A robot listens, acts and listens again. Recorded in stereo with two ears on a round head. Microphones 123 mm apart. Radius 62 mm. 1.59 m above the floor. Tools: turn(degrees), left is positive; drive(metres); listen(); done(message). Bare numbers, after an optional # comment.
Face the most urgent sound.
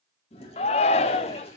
# The shout: about 45° left or 135° left.
turn(45)
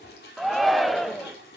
done("Found it: a shout, straight ahead.")